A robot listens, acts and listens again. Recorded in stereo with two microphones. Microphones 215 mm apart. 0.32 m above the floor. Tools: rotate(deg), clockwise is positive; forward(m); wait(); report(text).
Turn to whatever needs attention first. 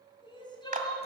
rotate(-20)
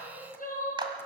rotate(-135)
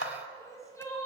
rotate(-15)
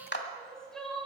report("Facing the crying.")